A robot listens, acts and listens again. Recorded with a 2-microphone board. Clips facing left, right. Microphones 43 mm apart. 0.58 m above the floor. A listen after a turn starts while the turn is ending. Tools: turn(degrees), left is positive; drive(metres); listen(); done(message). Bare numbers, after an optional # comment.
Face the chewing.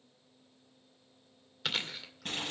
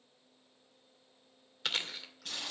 turn(30)
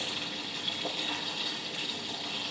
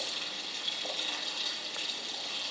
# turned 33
listen()
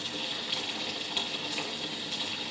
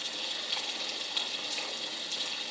listen()
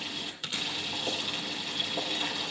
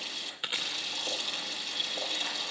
# So it is at 30° right.
turn(-30)
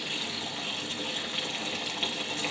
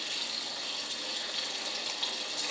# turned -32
listen()
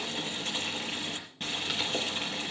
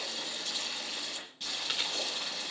listen()
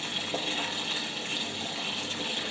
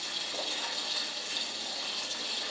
done("I heard chewing from this way, but can't make it out now.")